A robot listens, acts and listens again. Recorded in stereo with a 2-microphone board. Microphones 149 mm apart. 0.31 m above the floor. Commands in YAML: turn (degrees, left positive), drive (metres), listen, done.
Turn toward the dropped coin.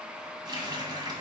listen: true
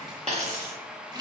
turn: -45
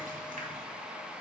listen: true
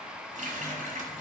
done: "I heard a dropped coin, but can't make it out now. It was about straight ahead or 90° right."